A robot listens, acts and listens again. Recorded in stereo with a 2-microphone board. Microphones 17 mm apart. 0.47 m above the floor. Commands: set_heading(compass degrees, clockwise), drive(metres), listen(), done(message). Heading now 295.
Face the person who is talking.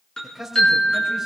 set_heading(325)
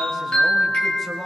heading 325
set_heading(310)
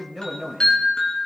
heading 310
done("Found it: a man speaking, straight ahead.")